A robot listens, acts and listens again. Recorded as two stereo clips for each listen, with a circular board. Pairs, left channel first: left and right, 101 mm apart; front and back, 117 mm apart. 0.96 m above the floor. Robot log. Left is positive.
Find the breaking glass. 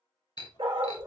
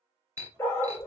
note: The breaking glass: 120° left.
cmd yaw +120
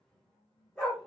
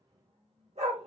end: Facing where the breaking glass came from. I can't hear it now.